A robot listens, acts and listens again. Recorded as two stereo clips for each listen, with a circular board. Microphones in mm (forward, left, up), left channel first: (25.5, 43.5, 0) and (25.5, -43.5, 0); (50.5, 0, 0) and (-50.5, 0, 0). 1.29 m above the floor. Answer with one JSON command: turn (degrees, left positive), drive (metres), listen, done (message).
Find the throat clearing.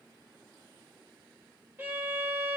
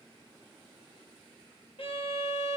{"listen": true}
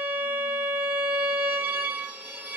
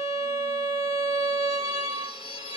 {"listen": true}
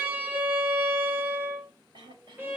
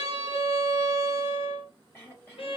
{"turn": -70}
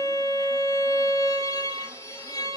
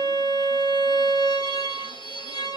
{"listen": true}
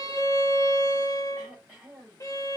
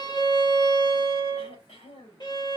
{"done": "Facing the throat clearing."}